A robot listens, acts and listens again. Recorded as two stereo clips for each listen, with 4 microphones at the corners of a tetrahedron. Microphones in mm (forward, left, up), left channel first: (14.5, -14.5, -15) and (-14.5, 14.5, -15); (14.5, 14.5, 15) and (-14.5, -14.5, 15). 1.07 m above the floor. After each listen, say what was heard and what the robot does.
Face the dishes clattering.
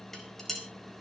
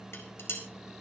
The dishes clattering: 40° left. Turn 40° left.
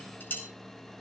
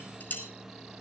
Found it: dishes clattering, straight ahead.